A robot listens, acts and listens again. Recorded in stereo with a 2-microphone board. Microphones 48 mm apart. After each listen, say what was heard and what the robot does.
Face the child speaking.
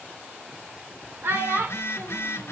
The child speaking: about 60° right or 120° right. Turn 60° right.
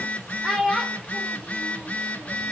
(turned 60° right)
Facing the child speaking.